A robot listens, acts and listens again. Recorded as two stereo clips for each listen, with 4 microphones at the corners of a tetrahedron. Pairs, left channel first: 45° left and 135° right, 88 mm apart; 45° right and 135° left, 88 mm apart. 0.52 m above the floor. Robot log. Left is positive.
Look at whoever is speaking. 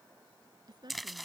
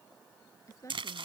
note: The woman speaking: 100° right.
cmd yaw -100
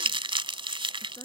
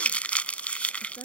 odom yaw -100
end: Facing the woman speaking.